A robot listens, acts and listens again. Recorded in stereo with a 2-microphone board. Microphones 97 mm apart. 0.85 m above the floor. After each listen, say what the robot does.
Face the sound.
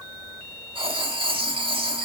Turn 65° right.
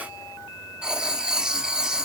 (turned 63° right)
Turn 10° right.
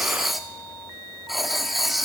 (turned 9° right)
Found it: writing, straight ahead, 1 to 2 m away.